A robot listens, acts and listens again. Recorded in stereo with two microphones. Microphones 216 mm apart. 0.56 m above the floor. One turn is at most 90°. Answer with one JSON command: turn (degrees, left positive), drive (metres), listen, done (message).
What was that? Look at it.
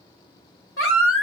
{"turn": 90}
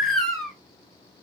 {"done": "Found it: a baby crying, straight ahead, under 1 m away."}